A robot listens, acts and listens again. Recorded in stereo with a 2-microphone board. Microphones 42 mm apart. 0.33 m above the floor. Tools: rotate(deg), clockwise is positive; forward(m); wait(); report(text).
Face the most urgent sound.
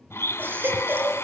rotate(50)
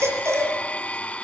rotate(80)
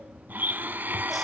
wait()
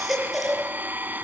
report("Found it: a baby crying, straight ahead, over 4 m away.")